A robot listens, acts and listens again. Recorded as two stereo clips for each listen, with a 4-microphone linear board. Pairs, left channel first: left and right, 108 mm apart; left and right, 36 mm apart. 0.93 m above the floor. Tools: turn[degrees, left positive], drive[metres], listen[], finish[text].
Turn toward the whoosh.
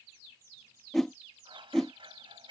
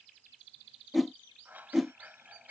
Action: turn[30]
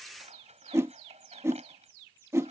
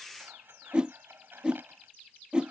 Thought: So it is at 25° right.
Action: turn[-25]
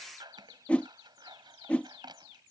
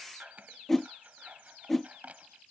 Thought: The whoosh is now 10° left.
Action: turn[10]
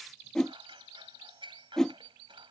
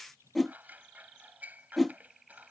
Action: finish[Found it: a whoosh, straight ahead.]